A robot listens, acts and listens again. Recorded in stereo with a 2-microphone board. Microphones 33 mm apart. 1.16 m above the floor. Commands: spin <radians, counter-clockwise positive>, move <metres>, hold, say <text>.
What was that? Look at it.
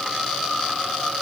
hold
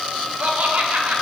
spin -1.05
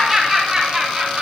spin -0.44
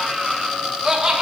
spin -0.44
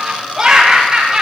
spin -0.44
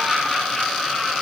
hold
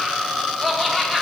spin 0.17
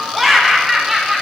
say Found it: laughter, straight ahead, 1 to 2 m away.